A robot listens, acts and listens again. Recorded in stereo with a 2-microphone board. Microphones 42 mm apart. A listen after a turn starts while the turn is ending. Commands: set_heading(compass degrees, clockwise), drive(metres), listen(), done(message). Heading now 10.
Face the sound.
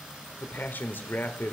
set_heading(315)
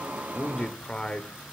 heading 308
set_heading(278)
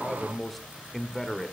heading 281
done("Facing the man speaking, 1 to 2 m away.")